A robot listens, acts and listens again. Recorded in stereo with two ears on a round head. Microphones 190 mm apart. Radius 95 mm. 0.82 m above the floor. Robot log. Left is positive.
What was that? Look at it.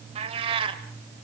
note: The cat meowing: about 25° right or 155° right.
cmd yaw -25
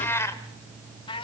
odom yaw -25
note: So it is at 25° left.
cmd yaw +25
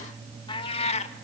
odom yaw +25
note: The cat meowing is now 30° left.
cmd yaw +30
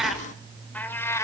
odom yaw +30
note: The cat meowing is now 15° left.
cmd yaw +15
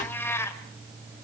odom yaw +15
note: The cat meowing is now 15° left.
cmd yaw +15
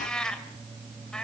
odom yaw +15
end: Facing the cat meowing, 2 to 4 m away.